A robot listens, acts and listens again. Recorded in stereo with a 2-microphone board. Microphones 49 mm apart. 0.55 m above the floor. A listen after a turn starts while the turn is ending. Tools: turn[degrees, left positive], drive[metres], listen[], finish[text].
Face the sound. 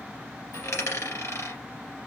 Thought: The dropped coin: about 75° left or 105° left.
Action: turn[75]
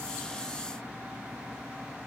Action: listen[]
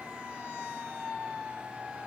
Action: finish[I heard a dropped coin, but can't make it out now. It was about straight ahead or 30° left.]